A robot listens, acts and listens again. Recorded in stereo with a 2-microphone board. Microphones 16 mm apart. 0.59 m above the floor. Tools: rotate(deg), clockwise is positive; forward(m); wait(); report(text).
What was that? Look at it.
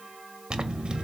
rotate(55)
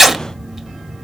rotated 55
rotate(15)
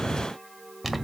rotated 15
report("Facing the zipper, under 1 m away.")